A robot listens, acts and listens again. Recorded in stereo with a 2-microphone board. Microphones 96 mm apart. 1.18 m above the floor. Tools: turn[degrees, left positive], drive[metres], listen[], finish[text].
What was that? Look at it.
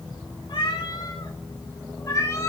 Thought: The cat meowing: about 30° left or 150° left.
Action: turn[30]
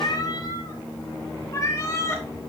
Thought: The cat meowing: about 30° left or 150° left.
Action: turn[30]
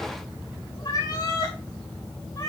Thought: The cat meowing: about 45° left or 135° left.
Action: turn[45]
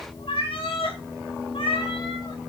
Thought: So it is at 105° left.
Action: turn[105]
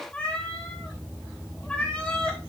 Thought: The cat meowing is now 10° left.
Action: turn[10]
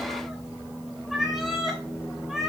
Action: finish[Facing the cat meowing.]